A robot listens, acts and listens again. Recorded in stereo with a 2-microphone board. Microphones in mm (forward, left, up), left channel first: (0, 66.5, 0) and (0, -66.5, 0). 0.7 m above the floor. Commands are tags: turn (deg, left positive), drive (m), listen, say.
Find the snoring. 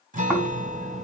<turn deg="-30"/>
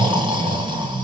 <turn deg="-145"/>
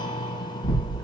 <turn deg="35"/>
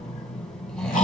<say>Found it: snoring, straight ahead.</say>